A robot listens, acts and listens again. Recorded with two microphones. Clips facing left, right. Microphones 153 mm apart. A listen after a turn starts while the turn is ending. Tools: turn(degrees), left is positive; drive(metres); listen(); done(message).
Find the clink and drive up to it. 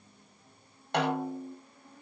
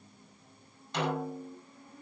listen()
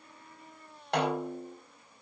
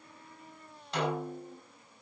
listen()
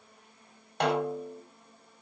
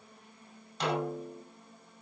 done("I can't make out a clink, only a snare drum.")